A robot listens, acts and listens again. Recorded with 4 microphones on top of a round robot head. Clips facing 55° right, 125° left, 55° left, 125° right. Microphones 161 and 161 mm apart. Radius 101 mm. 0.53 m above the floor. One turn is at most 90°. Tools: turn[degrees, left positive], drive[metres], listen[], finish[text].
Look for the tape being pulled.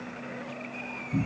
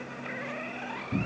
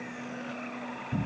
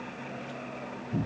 Action: listen[]
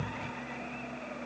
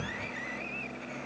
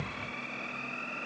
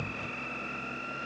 Action: listen[]
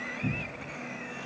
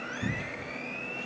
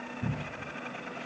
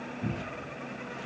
Action: finish[I can't make out tape being pulled to turn to.]